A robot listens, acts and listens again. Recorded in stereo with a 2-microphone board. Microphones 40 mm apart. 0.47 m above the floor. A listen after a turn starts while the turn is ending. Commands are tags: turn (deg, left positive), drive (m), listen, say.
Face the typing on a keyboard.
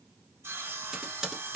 <turn deg="-30"/>
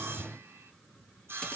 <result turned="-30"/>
<listen/>
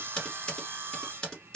<turn deg="20"/>
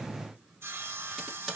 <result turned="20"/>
<say>Found it: typing on a keyboard, straight ahead, 1 to 2 m away.</say>